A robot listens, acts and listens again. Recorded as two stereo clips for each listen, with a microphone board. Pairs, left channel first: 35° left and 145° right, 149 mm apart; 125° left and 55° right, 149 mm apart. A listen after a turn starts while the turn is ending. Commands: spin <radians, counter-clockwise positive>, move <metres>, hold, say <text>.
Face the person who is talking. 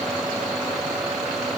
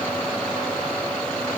hold
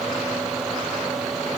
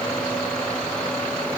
hold
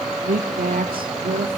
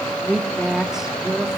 spin -2.44
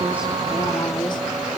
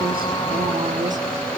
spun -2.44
hold
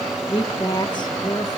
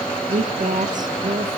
spin -0.44
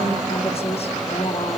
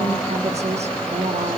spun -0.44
spin -0.17
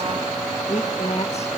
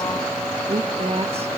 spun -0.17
spin -0.17
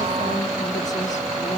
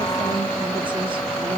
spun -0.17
hold
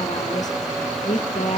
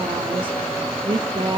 say Facing the woman speaking.